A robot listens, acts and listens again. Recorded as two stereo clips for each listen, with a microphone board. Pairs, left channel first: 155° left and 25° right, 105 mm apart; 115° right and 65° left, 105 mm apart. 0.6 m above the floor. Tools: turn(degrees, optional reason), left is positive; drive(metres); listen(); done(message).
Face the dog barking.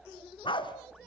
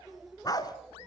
turn(degrees=-165, reason="The dog barking: 165° right.")
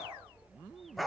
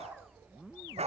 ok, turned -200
turn(degrees=70, reason="The dog barking is now 70° left.")
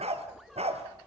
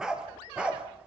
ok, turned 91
turn(degrees=-15, reason="The dog barking is now 15° right.")
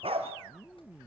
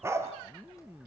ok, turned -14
done("Facing the dog barking.")